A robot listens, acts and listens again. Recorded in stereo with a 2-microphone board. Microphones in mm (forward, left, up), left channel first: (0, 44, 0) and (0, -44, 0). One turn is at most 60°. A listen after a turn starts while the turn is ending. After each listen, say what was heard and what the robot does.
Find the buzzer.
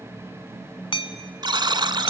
The buzzer: about 60° right or 120° right. Turn 60° right.
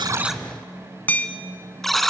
Found it: a buzzer, straight ahead, 1 to 2 m away.